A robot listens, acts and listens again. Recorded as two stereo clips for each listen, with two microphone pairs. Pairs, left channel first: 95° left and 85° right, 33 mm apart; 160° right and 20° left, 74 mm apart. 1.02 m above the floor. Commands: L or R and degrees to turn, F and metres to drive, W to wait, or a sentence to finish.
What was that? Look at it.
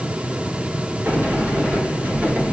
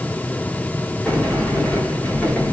R90
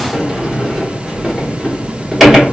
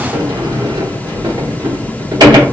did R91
Found it: a sliding door, straight ahead.